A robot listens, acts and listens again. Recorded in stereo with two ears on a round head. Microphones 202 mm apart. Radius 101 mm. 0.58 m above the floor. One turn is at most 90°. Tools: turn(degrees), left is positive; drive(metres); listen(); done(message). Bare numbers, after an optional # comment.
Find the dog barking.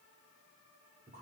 listen()
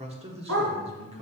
turn(-90)
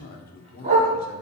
# So it is at 35° right.
turn(-35)
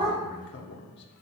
# The dog barking is now 25° right.
turn(-25)
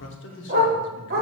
# The dog barking is now 45° right.
turn(-45)
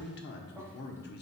listen()
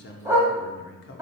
# The dog barking is now 10° right.
turn(-10)
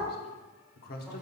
listen()
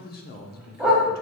done("Facing the dog barking, 1 to 2 m away.")